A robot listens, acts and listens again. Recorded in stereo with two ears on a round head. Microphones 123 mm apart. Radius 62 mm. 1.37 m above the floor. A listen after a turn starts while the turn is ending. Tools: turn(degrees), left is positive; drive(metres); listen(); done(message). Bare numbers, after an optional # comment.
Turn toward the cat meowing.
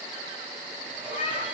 # The cat meowing: about 45° left or 135° left.
turn(45)
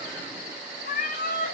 # So it is at 115° left.
turn(115)
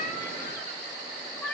# The cat meowing is now 10° left.
turn(10)
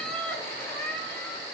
# The cat meowing is now 10° left.
turn(10)
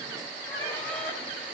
listen()
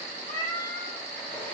# The cat meowing is now 10° left.
turn(10)
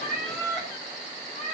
done("Facing the cat meowing, 2 to 4 m away.")